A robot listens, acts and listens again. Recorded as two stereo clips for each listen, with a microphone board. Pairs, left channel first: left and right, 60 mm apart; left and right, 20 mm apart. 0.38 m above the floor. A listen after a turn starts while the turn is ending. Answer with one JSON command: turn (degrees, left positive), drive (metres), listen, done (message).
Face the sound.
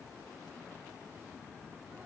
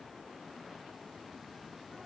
{"listen": true}
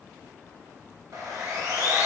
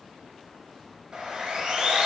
{"turn": -60}
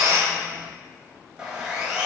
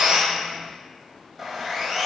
{"turn": -10}
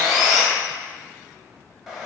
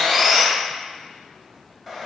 {"done": "Found it: sawing, straight ahead."}